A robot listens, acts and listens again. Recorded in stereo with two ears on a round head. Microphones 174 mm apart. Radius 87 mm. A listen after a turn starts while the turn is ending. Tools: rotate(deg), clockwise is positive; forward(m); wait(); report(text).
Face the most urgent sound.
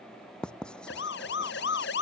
rotate(-60)
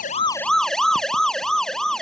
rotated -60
report("Found it: a siren, straight ahead.")